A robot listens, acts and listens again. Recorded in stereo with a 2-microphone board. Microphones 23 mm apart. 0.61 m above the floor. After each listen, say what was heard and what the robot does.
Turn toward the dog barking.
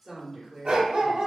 The dog barking: about 65° right or 115° right. Turn 65° right.
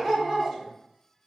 Found it: a dog barking, straight ahead, 1 to 2 m away.